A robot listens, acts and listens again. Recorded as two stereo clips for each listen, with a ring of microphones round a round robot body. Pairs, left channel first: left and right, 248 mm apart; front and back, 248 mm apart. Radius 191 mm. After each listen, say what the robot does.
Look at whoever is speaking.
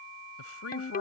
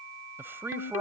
Turn 100° left.
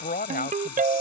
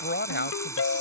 Turn 40° left.
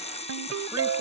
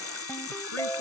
Keep listening.
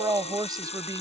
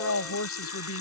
Turn 15° right.
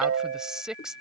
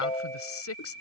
Found it: a woman speaking, straight ahead.